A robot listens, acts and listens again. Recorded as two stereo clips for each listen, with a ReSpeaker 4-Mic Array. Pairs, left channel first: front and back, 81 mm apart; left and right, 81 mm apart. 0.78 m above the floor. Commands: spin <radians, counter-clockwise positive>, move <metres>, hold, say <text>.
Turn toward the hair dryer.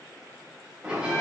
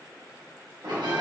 hold
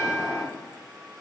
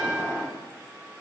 hold
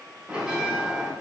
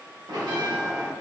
say I can't make out a hair dryer to turn to.